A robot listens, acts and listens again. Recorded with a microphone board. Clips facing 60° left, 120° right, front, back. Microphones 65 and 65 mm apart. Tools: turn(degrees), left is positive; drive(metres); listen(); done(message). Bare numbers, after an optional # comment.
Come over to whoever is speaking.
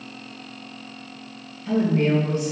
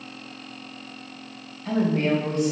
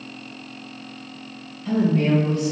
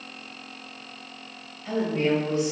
# The woman speaking: 115° right.
turn(-115)
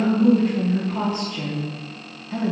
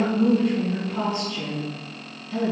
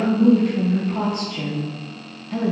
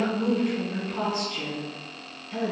drive(1.0)
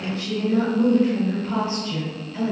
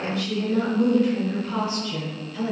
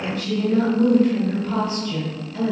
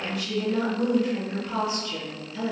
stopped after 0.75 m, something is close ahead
# The woman speaking is now 10° left.
turn(10)
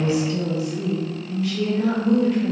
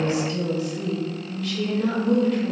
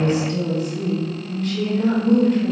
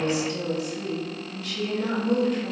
done("Arrived at the woman speaking, straight ahead.")